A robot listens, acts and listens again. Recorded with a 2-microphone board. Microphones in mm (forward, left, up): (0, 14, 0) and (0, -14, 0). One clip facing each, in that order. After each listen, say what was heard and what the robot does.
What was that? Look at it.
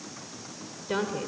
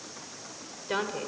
Turn 30° right.
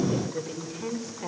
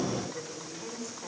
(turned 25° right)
So it is at 30° left. Turn 30° left.
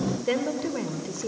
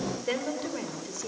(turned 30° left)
The woman speaking is now 10° left. Turn 10° left.
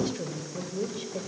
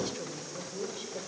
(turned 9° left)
The woman speaking is now 10° left. Turn 10° left.
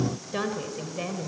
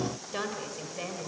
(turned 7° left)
The woman speaking is now 10° left. Turn 10° left.
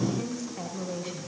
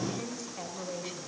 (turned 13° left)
Found it: a woman speaking, straight ahead.